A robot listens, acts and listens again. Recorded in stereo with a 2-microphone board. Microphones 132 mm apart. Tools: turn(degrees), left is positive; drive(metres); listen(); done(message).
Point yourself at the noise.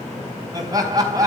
turn(degrees=-25)
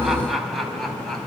done("Facing the laughter.")